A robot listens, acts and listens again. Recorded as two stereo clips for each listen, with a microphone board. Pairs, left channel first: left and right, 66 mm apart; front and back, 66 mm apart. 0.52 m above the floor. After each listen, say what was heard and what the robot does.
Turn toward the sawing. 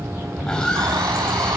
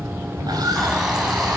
The sawing: 170° left. Turn 170° left.
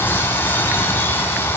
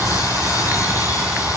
Keep listening.
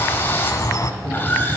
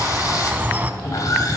The sawing is now 30° left. Turn 30° left.
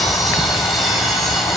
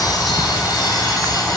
Facing the sawing.